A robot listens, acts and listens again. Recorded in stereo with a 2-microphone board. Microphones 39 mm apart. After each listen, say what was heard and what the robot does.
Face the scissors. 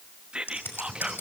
The scissors: about 70° left or 110° left. Turn 70° left.
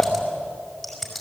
Facing the scissors, over 4 m away.